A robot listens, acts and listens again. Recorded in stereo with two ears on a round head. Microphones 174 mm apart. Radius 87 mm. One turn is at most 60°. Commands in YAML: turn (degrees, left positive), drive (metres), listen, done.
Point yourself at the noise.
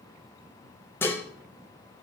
turn: 30
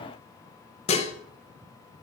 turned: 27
turn: 60
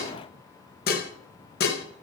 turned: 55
turn: 60
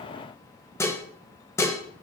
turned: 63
turn: 20
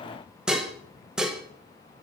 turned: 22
done: "Found it: dishes clattering, straight ahead."